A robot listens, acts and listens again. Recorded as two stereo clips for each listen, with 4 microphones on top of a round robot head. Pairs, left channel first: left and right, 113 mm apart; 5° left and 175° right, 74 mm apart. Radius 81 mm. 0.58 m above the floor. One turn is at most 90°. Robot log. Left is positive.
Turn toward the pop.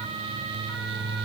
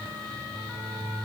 cmd idle
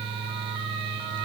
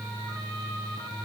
cmd idle
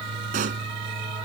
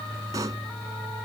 note: The pop: 115° right.
cmd yaw -90
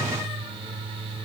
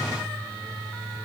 note: Nothing new. It was at 25° right.
cmd yaw -25
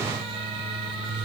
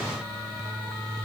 end: I heard a pop from this way, but can't make it out now.